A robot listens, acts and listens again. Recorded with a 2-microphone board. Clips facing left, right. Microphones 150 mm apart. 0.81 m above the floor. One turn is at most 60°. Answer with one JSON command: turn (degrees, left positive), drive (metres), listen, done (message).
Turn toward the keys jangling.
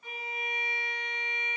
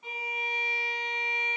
{"listen": true}
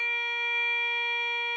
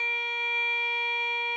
{"listen": true}
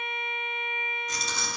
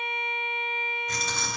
{"turn": -60}
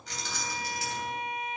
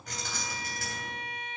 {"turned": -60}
{"turn": -55}
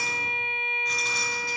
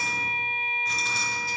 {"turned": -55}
{"done": "Facing the keys jangling."}